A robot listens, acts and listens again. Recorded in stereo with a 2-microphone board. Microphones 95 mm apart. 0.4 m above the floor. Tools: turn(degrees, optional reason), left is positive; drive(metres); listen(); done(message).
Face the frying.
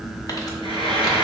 turn(degrees=90)
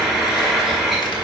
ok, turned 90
done("Facing the frying, 1 to 2 m away.")